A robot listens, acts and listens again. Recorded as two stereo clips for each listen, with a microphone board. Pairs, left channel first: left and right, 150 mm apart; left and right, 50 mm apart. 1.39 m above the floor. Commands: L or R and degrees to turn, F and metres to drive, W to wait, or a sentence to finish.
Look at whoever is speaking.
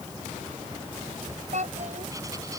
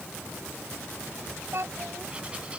R55
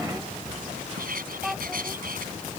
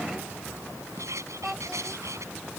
Facing the child speaking.